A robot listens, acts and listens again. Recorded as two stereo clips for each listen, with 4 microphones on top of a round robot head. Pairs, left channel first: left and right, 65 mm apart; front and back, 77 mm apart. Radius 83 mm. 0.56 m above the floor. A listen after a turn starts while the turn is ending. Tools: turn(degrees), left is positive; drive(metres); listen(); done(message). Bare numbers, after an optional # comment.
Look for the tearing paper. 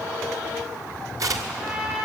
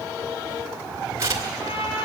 # The tearing paper: 125° right.
turn(-125)
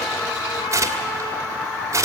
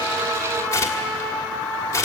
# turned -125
# The tearing paper is now 55° right.
turn(-55)
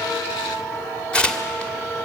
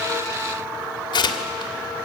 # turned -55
# The tearing paper is now 15° left.
turn(15)
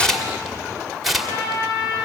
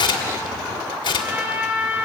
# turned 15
done("Found it: tearing paper, straight ahead, 1 to 2 m away.")